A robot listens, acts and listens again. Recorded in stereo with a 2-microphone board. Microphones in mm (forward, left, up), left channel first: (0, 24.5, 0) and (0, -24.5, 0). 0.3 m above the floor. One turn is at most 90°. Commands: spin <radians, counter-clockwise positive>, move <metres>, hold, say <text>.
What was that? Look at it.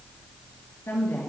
spin 0.96
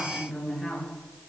spin 0.17
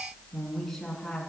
spin 0.26
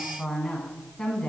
spin 0.26
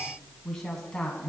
spin 0.17
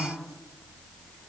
say Facing the woman speaking, 2 to 4 m away.